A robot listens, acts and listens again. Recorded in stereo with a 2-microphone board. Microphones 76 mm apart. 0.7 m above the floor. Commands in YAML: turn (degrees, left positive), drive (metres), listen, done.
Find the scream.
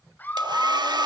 turn: 25
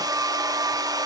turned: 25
listen: true
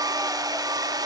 listen: true
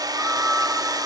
done: "I heard a scream, but can't make it out now. It was about straight ahead or 130° left."